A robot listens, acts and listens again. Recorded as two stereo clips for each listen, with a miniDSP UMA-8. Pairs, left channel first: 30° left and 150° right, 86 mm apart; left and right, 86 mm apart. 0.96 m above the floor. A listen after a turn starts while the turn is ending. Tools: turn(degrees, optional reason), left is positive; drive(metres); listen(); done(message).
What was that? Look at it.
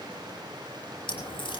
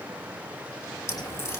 turn(degrees=35, reason="The crack: 35° left.")
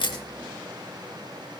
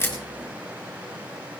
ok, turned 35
done("Facing where the crack came from. I can't hear it now.")